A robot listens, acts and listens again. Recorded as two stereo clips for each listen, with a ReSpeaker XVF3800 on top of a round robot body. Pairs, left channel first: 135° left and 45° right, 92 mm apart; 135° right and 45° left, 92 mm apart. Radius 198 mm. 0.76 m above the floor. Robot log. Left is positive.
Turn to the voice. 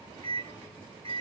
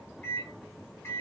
cmd idle
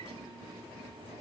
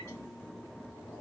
cmd idle
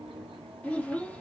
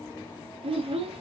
note: The child speaking: 60° left.
cmd yaw +60
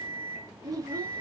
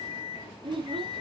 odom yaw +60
note: The child speaking is now 10° left.
cmd yaw +10
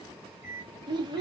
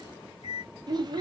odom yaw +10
end: Facing the child speaking, under 1 m away.